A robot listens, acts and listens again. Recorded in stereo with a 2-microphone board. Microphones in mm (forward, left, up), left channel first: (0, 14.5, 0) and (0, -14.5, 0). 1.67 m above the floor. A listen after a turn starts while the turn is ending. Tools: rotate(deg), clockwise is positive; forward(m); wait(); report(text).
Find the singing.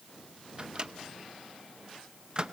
wait()
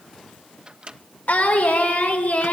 rotate(-65)
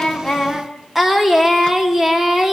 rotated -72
rotate(15)
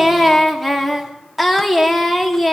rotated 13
report("Facing the singing.")